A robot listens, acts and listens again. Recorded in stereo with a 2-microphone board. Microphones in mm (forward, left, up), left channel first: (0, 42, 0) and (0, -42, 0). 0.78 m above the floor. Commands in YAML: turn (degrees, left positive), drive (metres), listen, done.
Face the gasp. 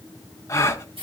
turn: 35
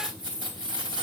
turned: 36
listen: true
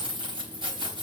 done: "I heard a gasp, but can't make it out now. It was about 5° right or 110° left."